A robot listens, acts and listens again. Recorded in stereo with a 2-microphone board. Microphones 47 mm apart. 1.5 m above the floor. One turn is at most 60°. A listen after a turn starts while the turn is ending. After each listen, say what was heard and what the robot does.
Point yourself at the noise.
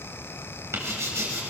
Turn 60° right.
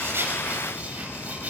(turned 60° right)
So it is at 30° right. Turn 30° right.
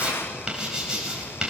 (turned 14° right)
The writing is now 20° right. Turn 20° right.
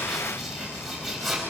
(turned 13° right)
Facing the writing, over 4 m away.